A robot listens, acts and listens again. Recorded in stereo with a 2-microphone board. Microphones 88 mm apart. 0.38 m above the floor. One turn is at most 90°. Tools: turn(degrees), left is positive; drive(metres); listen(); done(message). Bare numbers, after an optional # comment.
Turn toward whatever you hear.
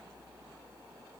listen()
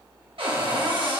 turn(-90)
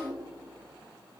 listen()
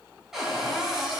done("Found it: a cupboard door, straight ahead.")